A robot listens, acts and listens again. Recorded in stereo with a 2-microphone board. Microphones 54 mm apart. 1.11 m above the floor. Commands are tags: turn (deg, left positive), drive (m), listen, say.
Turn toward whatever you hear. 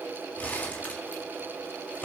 <turn deg="30"/>
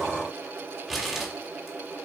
<say>Facing the crumpling, 2 to 4 m away.</say>